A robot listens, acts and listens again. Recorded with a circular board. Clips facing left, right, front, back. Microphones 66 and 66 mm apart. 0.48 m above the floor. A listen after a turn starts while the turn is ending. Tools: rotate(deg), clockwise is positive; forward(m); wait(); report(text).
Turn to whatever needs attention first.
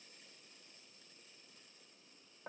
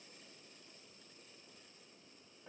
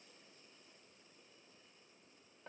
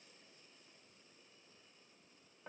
wait()
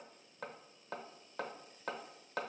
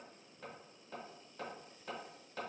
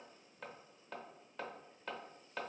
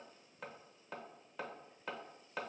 wait()
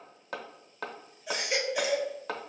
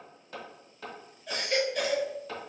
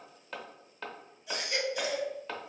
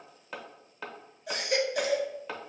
rotate(-170)
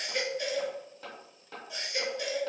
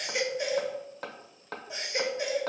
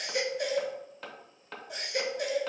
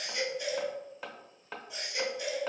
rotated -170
rotate(25)
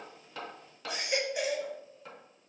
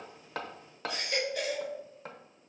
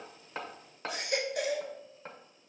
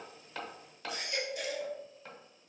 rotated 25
rotate(-20)
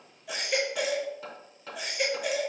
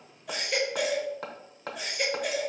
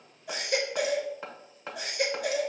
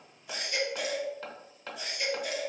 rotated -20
report("Facing the baby crying, under 1 m away.")